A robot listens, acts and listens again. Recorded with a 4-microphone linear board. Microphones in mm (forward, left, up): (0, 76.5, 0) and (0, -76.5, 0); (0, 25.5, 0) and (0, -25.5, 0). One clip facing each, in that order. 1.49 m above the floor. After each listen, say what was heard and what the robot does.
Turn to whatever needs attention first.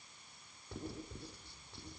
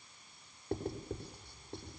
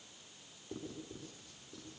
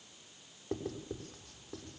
Keep listening.
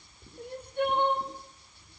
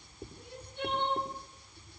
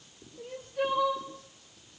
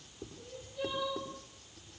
The crying: about 55° left or 125° left. Turn 55° left.
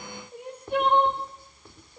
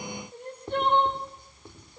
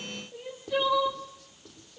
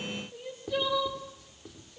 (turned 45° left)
So it is at 10° left. Turn 10° left.
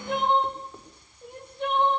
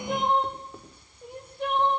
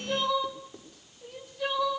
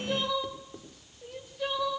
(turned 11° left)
Found it: crying, straight ahead.